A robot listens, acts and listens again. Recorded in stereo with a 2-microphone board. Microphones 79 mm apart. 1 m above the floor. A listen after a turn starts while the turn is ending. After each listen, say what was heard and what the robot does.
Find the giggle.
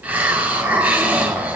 Keep listening.
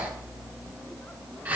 Keep listening.
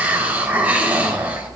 I can't make out a giggle to turn to.